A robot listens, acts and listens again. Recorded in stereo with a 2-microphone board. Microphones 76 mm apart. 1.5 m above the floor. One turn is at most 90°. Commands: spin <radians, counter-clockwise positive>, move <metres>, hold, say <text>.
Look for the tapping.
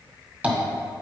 spin -0.35
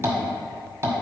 spin -1.57
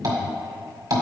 spin -1.05
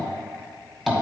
say Found it: tapping, straight ahead.